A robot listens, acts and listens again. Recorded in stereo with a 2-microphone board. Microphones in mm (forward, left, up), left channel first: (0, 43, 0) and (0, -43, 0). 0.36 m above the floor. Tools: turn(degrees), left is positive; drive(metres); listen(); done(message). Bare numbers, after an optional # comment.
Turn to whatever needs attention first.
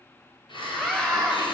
turn(30)
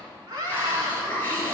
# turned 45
# So it is at 40° right.
turn(-40)
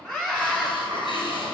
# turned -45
done("Found it: a scream, straight ahead, 2 to 4 m away.")